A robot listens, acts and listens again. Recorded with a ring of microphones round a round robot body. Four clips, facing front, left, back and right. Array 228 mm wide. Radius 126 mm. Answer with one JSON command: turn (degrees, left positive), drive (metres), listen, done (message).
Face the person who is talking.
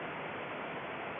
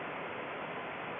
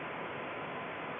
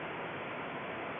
{"listen": true}
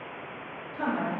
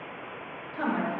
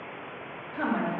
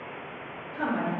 {"turn": 150}
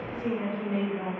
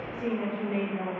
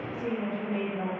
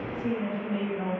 {"turn": 60}
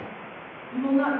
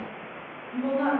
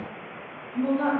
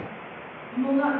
{"turn": -25}
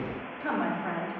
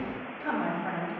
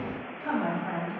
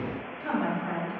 {"turn": -10}
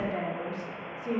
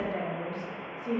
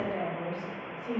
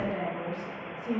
{"done": "Facing the woman speaking."}